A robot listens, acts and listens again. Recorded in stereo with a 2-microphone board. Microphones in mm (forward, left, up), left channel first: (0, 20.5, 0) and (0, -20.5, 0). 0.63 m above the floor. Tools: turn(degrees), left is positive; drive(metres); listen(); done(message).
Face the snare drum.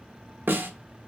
turn(degrees=-65)
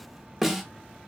done("Facing the snare drum, under 1 m away.")